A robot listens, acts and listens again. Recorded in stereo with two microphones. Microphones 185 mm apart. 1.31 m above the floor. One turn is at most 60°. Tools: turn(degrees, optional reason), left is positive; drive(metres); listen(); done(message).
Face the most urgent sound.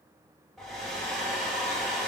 listen()
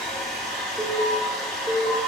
turn(degrees=-45, reason="The alarm: about 45° right or 135° right.")
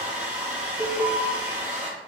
turn(degrees=-10, reason="So it is at 10° right.")
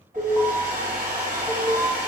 done("Found it: an alarm, straight ahead.")